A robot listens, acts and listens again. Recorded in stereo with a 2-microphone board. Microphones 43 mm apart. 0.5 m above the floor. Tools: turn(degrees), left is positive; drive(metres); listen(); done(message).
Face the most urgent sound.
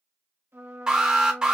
turn(degrees=-20)
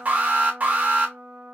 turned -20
turn(degrees=-140)
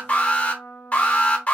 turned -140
turn(degrees=35)
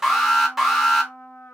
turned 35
turn(degrees=-10)
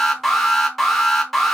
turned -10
done("Facing the alarm.")